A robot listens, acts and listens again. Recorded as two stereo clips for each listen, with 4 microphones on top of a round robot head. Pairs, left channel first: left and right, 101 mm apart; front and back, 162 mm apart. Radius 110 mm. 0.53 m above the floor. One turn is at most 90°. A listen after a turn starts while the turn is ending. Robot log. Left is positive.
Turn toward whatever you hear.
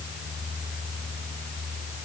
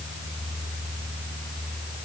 cmd idle
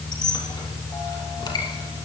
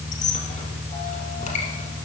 note: The squeak: 45° left.
cmd yaw +45
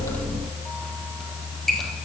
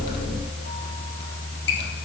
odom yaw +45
end: Facing the squeak.